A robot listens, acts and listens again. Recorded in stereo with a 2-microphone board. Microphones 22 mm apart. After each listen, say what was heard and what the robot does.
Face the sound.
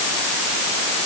Keep listening.
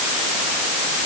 Keep listening.
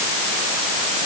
I can't make out anything.